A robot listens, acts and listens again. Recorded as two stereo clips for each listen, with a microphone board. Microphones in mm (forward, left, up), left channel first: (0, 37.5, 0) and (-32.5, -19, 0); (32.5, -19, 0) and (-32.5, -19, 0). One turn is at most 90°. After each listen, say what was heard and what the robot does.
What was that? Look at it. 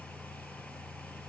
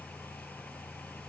Keep listening.
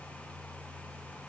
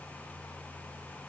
Keep listening.
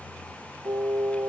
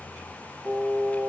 The singing: 125° right. Turn 90° right.
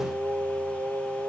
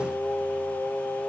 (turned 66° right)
The singing is now 60° right. Turn 60° right.
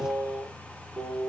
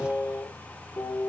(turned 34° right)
The singing is now 25° right. Turn 25° right.
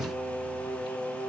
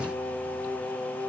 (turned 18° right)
Found it: singing, straight ahead, 1 to 2 m away.